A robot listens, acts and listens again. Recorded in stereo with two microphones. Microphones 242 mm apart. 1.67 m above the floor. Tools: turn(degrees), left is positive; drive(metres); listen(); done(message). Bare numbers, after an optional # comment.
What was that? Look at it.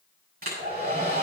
# The hair dryer: about 35° right or 145° right.
turn(-35)
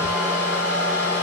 # So it is at 105° right.
turn(-105)
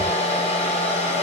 # The hair dryer is now 25° left.
turn(25)
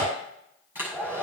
done("Facing the hair dryer, over 4 m away.")